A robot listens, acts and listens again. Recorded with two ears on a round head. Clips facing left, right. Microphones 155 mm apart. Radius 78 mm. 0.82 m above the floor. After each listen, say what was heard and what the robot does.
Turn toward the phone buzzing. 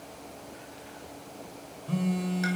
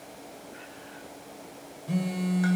The phone buzzing: about 15° right or 165° right. Turn 15° right.
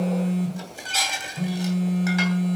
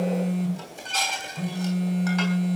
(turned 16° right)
Found it: a phone buzzing, straight ahead.